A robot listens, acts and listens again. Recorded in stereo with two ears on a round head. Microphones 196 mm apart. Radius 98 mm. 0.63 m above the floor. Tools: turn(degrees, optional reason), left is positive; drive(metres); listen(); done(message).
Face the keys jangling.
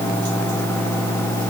listen()
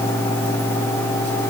listen()
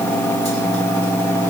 done("I can't make out keys jangling.")